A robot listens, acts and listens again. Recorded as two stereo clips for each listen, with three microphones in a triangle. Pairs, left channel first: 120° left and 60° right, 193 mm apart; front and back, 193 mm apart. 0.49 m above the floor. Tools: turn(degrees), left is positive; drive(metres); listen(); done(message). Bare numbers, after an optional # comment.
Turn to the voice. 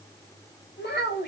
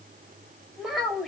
# The child speaking: 90° left.
turn(90)
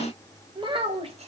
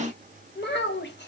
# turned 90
done("Found it: a child speaking, straight ahead.")